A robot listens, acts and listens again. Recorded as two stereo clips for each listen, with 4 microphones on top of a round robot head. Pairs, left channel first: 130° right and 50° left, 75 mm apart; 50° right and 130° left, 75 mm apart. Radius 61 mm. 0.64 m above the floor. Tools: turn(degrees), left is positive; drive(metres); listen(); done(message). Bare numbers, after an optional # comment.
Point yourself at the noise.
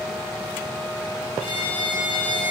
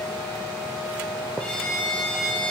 # The violin: 125° right.
turn(-125)
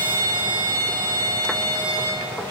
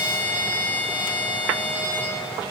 # The violin is now 15° left.
turn(15)
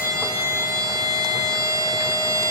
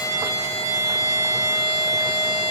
done("Facing the violin.")